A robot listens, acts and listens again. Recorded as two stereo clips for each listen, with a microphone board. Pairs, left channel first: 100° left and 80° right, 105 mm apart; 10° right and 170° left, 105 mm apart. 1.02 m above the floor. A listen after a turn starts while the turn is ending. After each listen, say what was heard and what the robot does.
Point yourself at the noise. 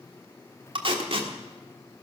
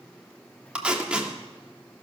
The tape being pulled: 110° right. Turn 110° right.
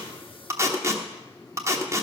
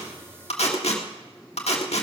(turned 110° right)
The tape being pulled is now 15° right. Turn 15° right.
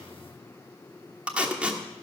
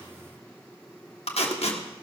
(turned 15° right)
Facing the tape being pulled, 1 to 2 m away.